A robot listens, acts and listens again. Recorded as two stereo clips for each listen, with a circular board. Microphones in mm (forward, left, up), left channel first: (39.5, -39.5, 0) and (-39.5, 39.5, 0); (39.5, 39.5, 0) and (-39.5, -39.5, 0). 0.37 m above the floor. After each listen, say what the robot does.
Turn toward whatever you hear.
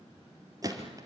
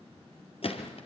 Turn 75° left.
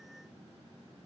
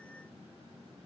Facing where the gunshot came from. I can't hear it now.